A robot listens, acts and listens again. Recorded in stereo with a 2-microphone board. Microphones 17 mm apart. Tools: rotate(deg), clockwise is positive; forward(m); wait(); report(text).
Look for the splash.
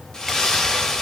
rotate(-35)
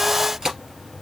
wait()
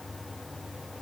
report("I heard a splash, but can't make it out now. It was about straight ahead or 110° left.")